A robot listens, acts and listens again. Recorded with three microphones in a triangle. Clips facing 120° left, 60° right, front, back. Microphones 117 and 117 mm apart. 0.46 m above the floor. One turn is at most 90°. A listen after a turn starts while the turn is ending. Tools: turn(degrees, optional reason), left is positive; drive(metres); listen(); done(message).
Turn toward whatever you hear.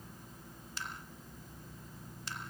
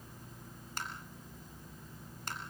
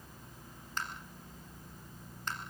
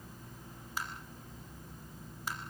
turn(degrees=-90, reason="The tapping: 100° right.")
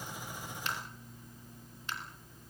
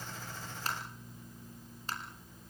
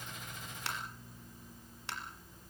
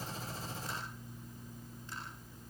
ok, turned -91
done("Facing the tapping.")